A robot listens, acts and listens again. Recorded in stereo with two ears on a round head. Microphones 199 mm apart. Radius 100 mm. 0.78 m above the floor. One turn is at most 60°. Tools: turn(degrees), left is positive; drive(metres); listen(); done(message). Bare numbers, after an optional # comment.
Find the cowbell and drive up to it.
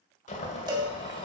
# The cowbell: about 20° right or 160° right.
turn(-20)
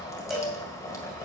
drive(1.0)
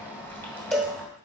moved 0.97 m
drive(1.0)
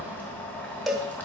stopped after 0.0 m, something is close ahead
done("Arrived at the cowbell, straight ahead.")